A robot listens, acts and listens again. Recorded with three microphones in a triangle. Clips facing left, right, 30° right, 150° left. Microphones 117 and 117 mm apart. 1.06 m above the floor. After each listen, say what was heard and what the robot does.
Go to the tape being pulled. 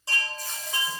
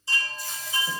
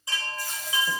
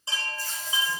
The tape being pulled: 45° left. Turn 45° left.
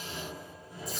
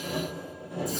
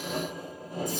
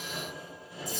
Keep listening.
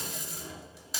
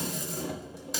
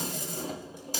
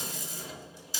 Drive 1.0 m forward.
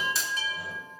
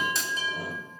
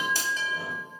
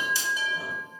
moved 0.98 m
Drive 1.0 m forward.
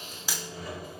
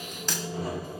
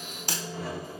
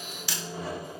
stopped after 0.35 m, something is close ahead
The tape being pulled is now 10° left. Turn 10° left.
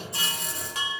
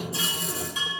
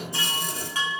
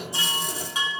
Keep listening.
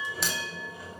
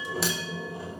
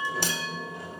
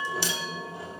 Keep listening.
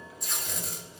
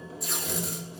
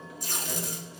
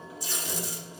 Arrived at the tape being pulled, straight ahead.